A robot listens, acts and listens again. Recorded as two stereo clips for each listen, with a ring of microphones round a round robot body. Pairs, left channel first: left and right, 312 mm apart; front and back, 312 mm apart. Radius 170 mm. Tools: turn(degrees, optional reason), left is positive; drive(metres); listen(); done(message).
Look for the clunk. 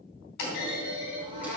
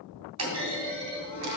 turn(degrees=145, reason="The clunk: 145° left.")
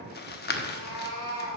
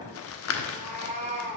done("I heard a clunk from this way, but can't make it out now.")